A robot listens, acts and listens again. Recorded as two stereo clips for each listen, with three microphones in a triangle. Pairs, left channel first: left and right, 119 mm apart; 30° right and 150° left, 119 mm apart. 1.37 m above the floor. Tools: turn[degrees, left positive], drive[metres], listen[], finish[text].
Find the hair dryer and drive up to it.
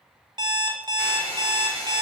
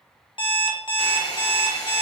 Thought: The hair dryer: 25° left.
Action: turn[25]
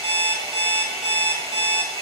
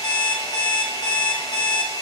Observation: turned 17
Thought: The hair dryer is now 10° left.
Action: turn[10]
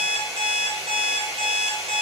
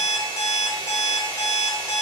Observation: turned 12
Action: drive[1.0]
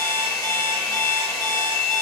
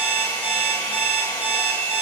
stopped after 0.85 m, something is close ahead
Action: finish[Arrived at the hair dryer, straight ahead.]